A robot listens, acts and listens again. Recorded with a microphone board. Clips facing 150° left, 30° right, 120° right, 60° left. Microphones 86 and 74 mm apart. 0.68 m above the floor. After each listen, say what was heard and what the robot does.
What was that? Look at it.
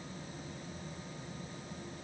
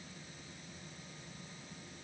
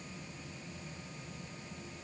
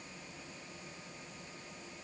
Keep listening.
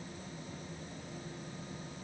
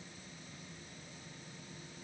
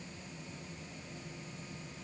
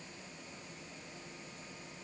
Keep listening.
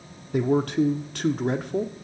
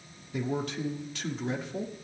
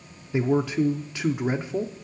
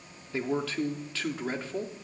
The man speaking: 170° left. Turn 170° left.
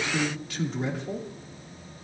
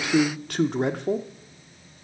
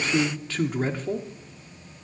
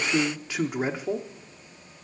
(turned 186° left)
The man speaking is now 20° right. Turn 20° right.
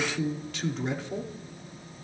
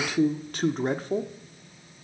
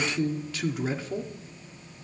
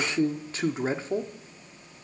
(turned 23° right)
Found it: a man speaking, straight ahead, 1 to 2 m away.